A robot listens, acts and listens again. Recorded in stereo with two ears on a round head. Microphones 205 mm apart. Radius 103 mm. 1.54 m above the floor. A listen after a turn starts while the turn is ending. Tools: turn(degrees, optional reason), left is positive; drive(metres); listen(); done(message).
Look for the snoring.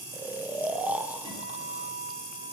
turn(degrees=-30)
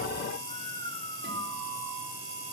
turn(degrees=20, reason="So it is at 20° left.")
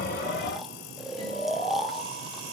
done("Found it: snoring, straight ahead, 1 to 2 m away.")